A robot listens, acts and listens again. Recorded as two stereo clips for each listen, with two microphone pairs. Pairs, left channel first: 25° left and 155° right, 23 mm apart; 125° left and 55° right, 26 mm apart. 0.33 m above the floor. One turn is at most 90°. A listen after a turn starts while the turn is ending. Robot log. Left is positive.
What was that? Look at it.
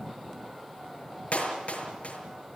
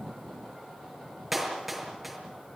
note: The clap: 25° left.
cmd yaw +25
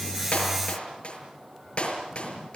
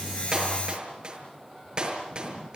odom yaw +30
end: Facing the clap, over 4 m away.